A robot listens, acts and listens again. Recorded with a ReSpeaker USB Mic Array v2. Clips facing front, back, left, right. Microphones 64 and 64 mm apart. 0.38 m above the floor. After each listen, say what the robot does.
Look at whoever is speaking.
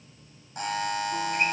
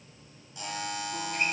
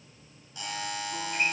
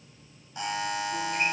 Keep listening.
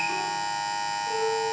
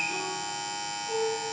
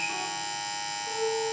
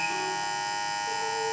Keep listening.
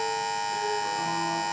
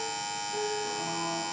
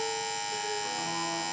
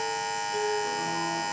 I can't make out anyone speaking to turn to.